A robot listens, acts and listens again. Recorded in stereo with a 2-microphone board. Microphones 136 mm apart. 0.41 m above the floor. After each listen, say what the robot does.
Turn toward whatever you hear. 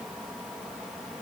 Keep listening.
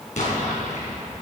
Turn 70° left.
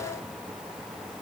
Keep listening.
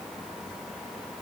I heard an explosion, but can't make it out now. It was about straight ahead or 40° left.